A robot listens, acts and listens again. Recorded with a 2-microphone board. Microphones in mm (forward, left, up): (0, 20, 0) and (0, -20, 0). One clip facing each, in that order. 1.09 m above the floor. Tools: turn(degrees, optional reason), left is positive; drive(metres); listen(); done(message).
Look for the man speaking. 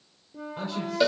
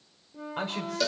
turn(degrees=-50, reason="The man speaking: about 50° right or 130° right.")
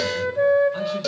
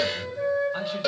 listen()
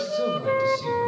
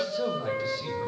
listen()
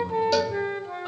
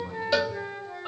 done("I heard a man speaking, but can't make it out now. It was about straight ahead or 80° right.")